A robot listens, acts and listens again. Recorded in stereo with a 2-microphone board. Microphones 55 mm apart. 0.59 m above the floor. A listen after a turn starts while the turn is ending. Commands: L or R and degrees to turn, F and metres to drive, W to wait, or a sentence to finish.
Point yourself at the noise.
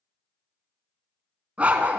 R30
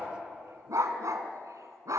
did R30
R95
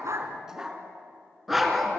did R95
Found it: a dog barking, straight ahead, 2 to 4 m away.